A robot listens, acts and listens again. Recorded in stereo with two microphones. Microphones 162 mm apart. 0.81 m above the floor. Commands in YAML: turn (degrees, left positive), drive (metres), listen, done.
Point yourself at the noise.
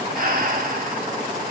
turn: -55
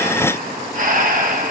turn: -60
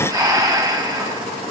turn: -25
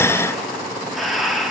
done: "Found it: breathing, straight ahead, 1 to 2 m away."